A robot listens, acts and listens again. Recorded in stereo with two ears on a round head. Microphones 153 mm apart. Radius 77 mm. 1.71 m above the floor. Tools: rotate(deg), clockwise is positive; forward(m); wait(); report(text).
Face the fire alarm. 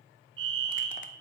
rotate(90)
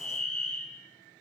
report("Found it: a fire alarm, straight ahead, 1 to 2 m away.")